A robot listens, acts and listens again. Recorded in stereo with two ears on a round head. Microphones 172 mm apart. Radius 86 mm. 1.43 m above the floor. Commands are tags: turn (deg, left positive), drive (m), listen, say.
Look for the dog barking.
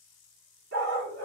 <turn deg="-65"/>
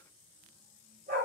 <turn deg="-40"/>
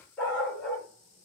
<say>Found it: a dog barking, straight ahead.</say>